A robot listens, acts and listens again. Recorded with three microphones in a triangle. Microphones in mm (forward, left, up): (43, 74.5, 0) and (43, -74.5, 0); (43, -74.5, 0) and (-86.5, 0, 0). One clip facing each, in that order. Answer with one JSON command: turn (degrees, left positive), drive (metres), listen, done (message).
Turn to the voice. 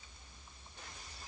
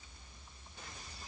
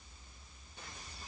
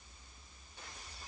{"listen": true}
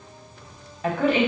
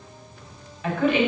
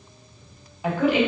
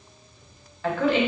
{"turn": 40}
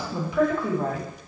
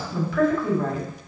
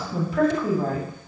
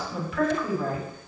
{"turn": 20}
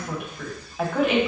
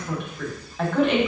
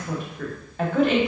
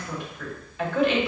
{"done": "Facing the woman speaking, 1 to 2 m away."}